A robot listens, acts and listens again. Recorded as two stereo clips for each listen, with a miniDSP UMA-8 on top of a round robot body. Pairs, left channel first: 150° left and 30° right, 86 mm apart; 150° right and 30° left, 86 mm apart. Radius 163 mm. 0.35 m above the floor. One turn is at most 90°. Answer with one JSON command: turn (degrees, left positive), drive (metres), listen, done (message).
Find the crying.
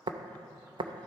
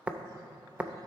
{"listen": true}
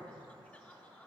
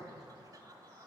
{"listen": true}
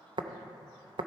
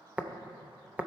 {"done": "I can't make out crying to turn to."}